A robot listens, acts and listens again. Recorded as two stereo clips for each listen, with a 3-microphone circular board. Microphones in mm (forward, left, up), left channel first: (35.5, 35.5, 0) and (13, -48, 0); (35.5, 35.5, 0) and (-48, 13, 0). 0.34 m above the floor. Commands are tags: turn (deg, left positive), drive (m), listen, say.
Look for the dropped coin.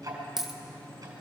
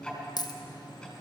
<turn deg="-20"/>
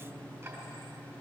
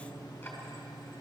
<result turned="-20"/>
<say>Facing where the dropped coin came from. I can't hear it now.</say>